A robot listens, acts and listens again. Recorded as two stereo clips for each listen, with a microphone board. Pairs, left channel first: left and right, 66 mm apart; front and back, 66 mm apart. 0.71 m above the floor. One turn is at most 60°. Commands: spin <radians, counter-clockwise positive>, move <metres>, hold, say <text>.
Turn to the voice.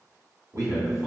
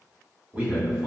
spin -1.05
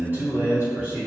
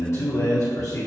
spin -0.44
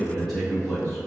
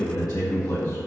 spin 0.17
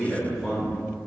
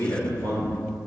say Facing the man speaking.